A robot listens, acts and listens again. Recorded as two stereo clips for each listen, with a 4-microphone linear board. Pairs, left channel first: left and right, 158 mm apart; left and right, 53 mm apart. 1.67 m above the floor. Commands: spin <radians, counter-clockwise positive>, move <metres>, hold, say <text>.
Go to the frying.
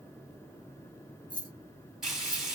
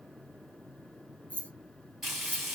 spin 0.52
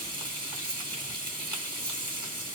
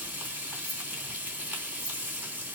spin -0.52
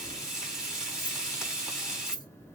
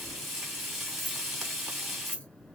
move 1.0
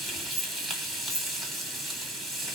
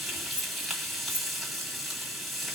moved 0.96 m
move 1.0
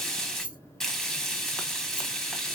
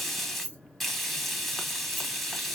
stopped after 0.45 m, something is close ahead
say I am next to the frying.